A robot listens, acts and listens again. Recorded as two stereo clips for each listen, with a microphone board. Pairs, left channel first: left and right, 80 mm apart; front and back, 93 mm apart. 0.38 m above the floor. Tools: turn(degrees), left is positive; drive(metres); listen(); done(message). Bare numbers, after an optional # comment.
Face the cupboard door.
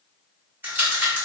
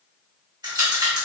listen()
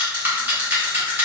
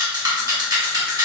listen()
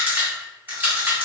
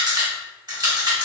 done("I can't make out a cupboard door to turn to.")